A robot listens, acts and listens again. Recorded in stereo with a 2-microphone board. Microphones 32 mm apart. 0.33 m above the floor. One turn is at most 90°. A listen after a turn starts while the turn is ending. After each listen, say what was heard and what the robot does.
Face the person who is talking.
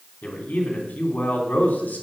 The man speaking: about 65° left or 115° left. Turn 65° left.
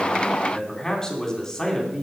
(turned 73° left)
So it is at 30° left. Turn 30° left.
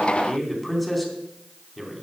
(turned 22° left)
Found it: a man speaking, straight ahead, 2 to 4 m away.